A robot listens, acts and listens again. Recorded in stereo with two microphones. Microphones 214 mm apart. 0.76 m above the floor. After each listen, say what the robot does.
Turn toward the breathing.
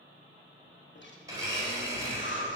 Turn 60° left.
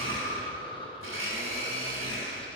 Turn 25° left.
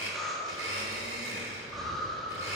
Found it: breathing, straight ahead, 1 to 2 m away.